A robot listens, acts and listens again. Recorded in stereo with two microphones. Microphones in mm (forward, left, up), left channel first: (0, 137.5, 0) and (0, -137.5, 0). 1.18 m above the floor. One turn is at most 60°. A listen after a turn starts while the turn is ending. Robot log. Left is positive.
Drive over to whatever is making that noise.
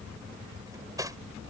cmd yaw -30
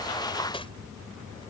note: So it is at 20° left.
cmd yaw +20
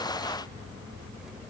cmd idle
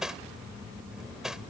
cmd fwd 1.0
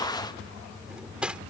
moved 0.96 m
cmd fwd 1.0
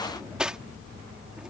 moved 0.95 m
cmd fwd 1.0
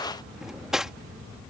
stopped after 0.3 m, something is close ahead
end: Arrived at the cutlery clinking, straight ahead.